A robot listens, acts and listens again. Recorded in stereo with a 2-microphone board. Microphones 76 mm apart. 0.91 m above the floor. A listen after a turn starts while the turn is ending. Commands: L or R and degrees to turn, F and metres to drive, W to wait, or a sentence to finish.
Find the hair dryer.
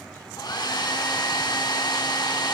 L70
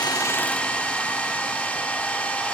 L20
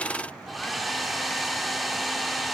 Found it: a hair dryer, straight ahead.